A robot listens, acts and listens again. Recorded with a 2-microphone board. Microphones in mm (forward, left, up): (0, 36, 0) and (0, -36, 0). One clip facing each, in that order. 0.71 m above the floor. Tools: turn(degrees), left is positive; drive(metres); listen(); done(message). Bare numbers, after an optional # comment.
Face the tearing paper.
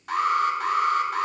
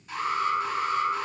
listen()
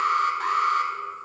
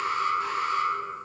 listen()
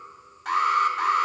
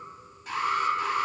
done("I can't make out tearing paper to turn to.")